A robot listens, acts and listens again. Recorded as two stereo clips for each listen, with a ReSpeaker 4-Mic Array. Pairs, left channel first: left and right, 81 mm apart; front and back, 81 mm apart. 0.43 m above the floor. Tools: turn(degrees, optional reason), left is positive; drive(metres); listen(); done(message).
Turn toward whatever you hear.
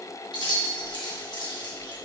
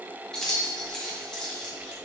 turn(degrees=80, reason="The keys jangling: 80° left.")
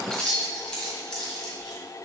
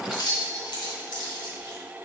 turn(degrees=10, reason="The keys jangling is now 10° left.")
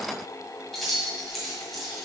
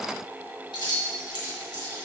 done("Facing the keys jangling.")